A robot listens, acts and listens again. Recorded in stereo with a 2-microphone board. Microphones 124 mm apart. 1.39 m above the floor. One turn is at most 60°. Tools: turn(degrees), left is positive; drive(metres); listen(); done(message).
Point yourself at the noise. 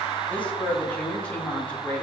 turn(degrees=30)
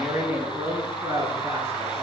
turn(degrees=-20)
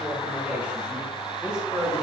turn(degrees=-10)
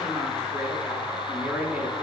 done("Facing the woman speaking, over 4 m away.")